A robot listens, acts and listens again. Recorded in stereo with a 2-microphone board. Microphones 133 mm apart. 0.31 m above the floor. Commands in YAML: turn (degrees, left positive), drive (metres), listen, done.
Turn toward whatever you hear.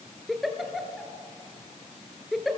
turn: 30
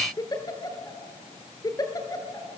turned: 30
turn: 150
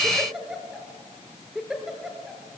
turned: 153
done: "Facing the giggle."